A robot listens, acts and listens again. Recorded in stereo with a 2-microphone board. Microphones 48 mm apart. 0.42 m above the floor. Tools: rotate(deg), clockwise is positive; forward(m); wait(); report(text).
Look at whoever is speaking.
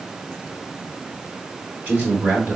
rotate(50)
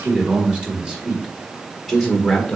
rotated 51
report("Facing the man speaking, 1 to 2 m away.")